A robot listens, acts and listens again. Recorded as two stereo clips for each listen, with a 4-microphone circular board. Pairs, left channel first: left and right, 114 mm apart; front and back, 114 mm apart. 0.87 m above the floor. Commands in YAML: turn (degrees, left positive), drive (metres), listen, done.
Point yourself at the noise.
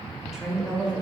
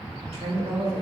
turn: -165
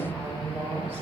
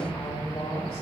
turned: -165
turn: -20
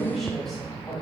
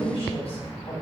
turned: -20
done: "Facing the woman speaking, 2 to 4 m away."